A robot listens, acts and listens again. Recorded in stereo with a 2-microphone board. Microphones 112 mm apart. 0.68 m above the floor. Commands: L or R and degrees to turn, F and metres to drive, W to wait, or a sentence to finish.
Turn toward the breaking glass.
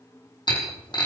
L40
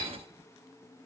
W
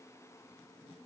I heard breaking glass, but can't make it out now. It was about straight ahead or 100° left.